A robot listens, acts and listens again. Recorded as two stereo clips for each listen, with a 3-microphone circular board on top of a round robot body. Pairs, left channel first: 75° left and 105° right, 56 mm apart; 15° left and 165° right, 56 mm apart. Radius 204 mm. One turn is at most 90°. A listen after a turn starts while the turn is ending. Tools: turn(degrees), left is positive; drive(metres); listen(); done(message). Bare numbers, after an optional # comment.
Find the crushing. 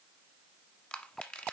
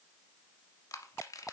done("Facing the crushing, 1 to 2 m away.")